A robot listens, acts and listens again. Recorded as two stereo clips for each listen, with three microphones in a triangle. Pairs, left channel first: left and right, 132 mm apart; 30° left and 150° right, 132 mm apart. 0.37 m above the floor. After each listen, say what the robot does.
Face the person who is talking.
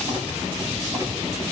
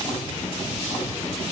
Keep listening.
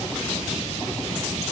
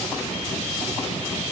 Keep listening.
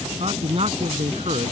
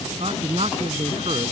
Turn 120° right.
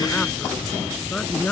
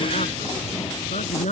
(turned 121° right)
Turn 10° left.
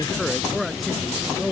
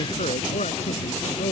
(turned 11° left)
Found it: a man speaking, straight ahead.